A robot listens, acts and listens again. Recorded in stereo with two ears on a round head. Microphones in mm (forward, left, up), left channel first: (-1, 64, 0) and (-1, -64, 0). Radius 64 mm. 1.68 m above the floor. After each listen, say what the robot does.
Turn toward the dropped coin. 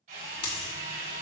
Turn 40° left.
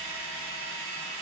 Keep listening.
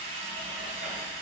I heard a dropped coin, but can't make it out now. It was about straight ahead or 100° left.